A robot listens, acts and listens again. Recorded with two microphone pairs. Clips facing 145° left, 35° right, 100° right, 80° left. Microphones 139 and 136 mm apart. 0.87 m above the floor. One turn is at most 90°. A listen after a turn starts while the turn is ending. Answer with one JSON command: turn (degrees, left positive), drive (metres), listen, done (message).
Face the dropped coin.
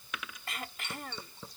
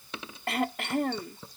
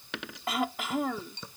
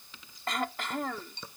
{"turn": -90}
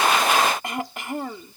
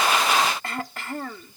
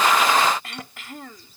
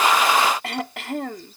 {"done": "Facing where the dropped coin came from. I can't hear it now."}